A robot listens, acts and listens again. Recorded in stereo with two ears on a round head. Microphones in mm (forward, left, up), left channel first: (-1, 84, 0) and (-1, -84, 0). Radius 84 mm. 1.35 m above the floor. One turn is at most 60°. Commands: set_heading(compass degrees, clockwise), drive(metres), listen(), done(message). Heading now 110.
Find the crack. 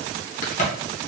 set_heading(70)
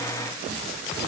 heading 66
listen()
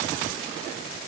done("I heard a crack, but can't make it out now. It was about straight ahead or 95° left.")